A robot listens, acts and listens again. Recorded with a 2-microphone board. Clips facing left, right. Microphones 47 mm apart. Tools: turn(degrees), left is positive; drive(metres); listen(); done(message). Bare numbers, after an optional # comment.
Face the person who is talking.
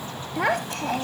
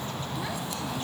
# The child speaking: about 70° left or 110° left.
turn(70)
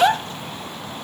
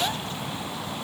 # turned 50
# So it is at 60° left.
turn(60)
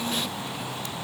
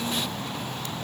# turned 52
# Nothing new. It was at 10° left.
turn(10)
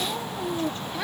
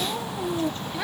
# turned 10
done("Found it: a child speaking, straight ahead.")